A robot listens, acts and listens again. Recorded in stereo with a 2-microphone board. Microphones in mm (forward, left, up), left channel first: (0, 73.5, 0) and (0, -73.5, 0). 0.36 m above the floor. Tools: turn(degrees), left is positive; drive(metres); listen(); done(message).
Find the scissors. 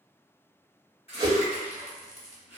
turn(degrees=50)
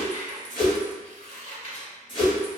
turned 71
turn(degrees=55)
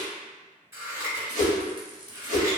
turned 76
turn(degrees=-20)
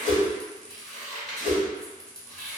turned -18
done("Facing the scissors, 1 to 2 m away.")